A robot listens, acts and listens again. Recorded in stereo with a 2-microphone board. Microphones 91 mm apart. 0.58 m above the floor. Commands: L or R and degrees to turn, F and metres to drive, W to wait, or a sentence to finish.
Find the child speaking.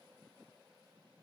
W
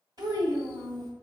R50
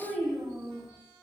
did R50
Facing the child speaking.